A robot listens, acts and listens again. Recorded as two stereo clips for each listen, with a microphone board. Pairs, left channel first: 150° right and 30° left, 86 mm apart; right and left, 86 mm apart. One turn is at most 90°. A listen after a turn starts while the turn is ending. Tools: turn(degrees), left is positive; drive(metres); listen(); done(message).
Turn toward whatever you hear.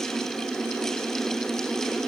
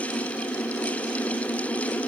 listen()
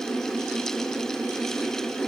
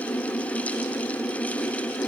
listen()
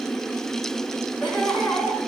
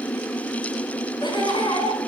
turn(degrees=-80)
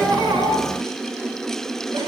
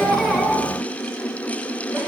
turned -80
listen()
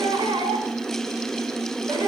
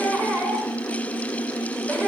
turn(degrees=20)
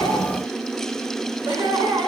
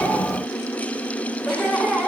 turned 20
done("Found it: laughter, straight ahead.")